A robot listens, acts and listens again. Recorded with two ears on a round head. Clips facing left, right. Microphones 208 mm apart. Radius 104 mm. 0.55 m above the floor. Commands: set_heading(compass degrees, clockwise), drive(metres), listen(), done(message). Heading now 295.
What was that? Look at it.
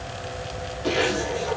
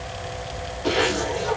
set_heading(325)
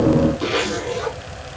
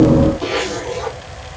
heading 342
set_heading(297)
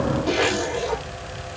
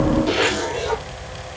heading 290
set_heading(300)
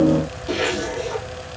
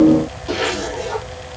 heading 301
done("Found it: a zipper, straight ahead.")